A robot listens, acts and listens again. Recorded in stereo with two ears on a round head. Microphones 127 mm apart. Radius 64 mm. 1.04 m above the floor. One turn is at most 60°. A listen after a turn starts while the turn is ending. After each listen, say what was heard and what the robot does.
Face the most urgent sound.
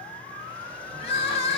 The crying: about 40° left or 140° left. Turn 40° left.
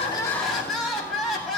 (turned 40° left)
Facing the crying, 1 to 2 m away.